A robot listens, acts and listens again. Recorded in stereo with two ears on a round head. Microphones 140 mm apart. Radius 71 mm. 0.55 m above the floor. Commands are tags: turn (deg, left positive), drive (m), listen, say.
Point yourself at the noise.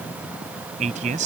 <turn deg="-50"/>
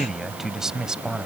<say>Found it: a man speaking, straight ahead.</say>